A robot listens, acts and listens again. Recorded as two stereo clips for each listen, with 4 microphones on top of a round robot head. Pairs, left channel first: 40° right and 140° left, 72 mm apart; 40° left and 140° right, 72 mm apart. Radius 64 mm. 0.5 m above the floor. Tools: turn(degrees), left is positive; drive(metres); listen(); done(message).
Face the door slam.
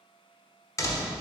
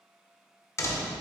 done("Facing the door slam, 1 to 2 m away.")